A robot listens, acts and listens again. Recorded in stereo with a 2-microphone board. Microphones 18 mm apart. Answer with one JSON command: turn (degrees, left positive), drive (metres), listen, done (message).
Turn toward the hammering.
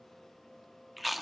{"listen": true}
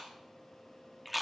{"listen": true}
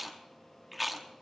{"done": "I can't make out hammering to turn to."}